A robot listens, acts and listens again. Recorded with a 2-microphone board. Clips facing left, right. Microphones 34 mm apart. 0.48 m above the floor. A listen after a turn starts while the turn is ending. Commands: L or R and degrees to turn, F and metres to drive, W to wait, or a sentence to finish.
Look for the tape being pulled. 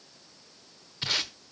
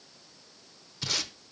L35
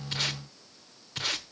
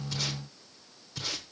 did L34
L105
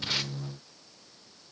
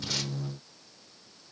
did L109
W
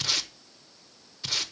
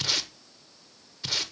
Found it: tape being pulled, straight ahead, under 1 m away.